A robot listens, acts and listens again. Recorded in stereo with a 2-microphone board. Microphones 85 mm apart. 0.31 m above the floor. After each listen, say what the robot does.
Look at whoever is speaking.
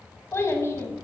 Turn 30° left.
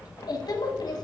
Turn 115° left.
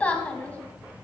Turn 20° left.
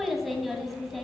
Found it: a child speaking, straight ahead.